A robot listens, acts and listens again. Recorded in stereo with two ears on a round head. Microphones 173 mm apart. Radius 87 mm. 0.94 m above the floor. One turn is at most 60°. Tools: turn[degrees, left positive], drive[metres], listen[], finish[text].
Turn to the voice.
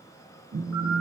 Action: listen[]
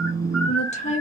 Thought: The woman speaking: about 40° left or 140° left.
Action: turn[40]
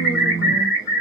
Action: listen[]
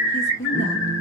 Thought: So it is at 95° left.
Action: turn[60]
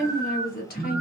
Thought: The woman speaking is now 55° left.
Action: turn[55]
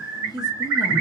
Thought: The woman speaking is now 25° left.
Action: turn[25]
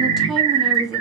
Action: finish[Facing the woman speaking, under 1 m away.]